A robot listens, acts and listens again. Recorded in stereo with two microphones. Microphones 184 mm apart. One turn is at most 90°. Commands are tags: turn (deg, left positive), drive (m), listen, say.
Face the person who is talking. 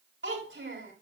<turn deg="-90"/>
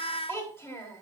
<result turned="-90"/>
<turn deg="15"/>
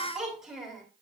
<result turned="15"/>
<say>Found it: a child speaking, straight ahead, 2 to 4 m away.</say>